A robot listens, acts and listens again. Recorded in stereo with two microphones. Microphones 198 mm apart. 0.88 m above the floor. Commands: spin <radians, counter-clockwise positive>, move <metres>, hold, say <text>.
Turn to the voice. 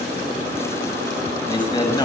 spin 0.35
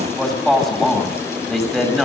say Found it: a man speaking, straight ahead.